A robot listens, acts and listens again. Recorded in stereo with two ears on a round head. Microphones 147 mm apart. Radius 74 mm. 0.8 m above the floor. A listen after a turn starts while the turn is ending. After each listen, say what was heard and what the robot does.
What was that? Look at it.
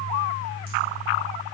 Keep listening.
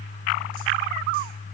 Keep listening.
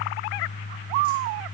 I can't make out anything to turn to.